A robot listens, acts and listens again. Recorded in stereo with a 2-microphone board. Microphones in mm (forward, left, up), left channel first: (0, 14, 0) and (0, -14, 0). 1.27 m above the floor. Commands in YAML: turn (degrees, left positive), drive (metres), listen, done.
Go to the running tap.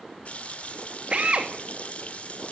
turn: 55
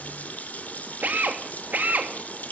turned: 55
turn: 70
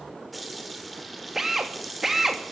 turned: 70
drive: 1.0
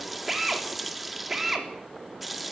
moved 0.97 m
drive: 1.0
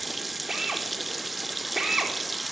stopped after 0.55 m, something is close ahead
done: "I am next to the running tap."